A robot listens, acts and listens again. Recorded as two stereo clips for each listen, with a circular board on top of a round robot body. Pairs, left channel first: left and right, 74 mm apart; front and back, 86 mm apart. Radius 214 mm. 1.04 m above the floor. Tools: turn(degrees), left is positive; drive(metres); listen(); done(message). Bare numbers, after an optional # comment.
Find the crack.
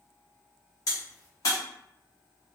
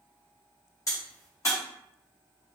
# The crack: 55° left.
turn(55)
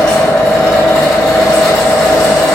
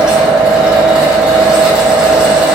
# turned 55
done("I heard a crack from this way, but can't make it out now.")